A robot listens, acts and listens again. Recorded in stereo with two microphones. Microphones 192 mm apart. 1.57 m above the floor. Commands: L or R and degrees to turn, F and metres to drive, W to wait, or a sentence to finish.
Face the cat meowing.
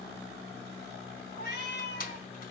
L60
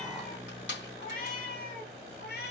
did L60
L55
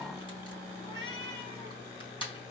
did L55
L25
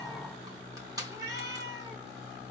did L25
R20
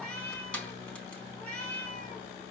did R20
Facing the cat meowing, over 4 m away.